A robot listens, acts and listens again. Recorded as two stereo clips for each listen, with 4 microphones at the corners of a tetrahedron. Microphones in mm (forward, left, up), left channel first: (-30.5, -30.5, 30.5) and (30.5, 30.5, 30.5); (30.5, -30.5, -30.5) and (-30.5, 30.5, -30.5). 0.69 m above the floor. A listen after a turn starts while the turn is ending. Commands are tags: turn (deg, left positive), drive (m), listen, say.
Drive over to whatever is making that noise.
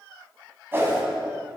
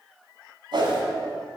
<turn deg="110"/>
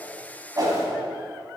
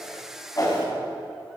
<drive m="1.0"/>
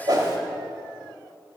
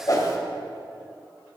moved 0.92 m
<drive m="1.0"/>
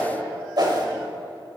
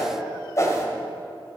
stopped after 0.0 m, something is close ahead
<turn deg="10"/>
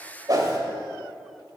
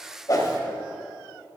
<say>Arrived at the whoosh, straight ahead.</say>